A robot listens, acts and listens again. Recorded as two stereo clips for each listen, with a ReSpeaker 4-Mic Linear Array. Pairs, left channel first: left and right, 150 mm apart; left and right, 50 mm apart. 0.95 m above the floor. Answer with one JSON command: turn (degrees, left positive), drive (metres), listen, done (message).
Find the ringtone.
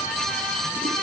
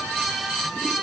{"listen": true}
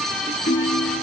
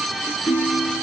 {"turn": 75}
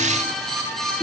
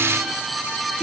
{"listen": true}
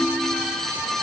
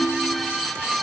{"done": "Found it: a ringtone, straight ahead."}